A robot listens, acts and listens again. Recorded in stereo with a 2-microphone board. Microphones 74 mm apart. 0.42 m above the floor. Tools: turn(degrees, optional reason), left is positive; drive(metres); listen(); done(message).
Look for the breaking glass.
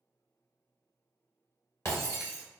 turn(degrees=40, reason="The breaking glass: about 40° left or 140° left.")
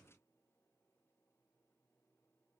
listen()
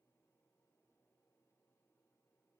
done("I heard breaking glass, but can't make it out now. It was about straight ahead or 100° left.")